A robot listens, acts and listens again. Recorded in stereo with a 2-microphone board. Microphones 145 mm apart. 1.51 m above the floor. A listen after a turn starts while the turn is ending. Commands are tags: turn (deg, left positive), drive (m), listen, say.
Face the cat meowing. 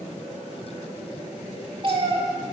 <turn deg="-40"/>
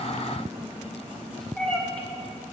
<turn deg="10"/>
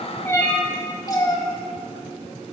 <turn deg="30"/>
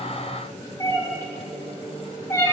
<turn deg="25"/>
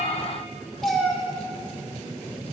<say>Found it: a cat meowing, straight ahead, 1 to 2 m away.</say>